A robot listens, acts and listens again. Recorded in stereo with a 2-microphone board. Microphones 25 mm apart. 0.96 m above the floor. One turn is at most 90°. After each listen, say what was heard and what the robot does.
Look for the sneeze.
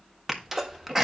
The sneeze: about 20° right or 160° right. Turn 20° right.
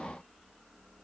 Keep listening.
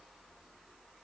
I heard a sneeze, but can't make it out now. It was about straight ahead or 140° right.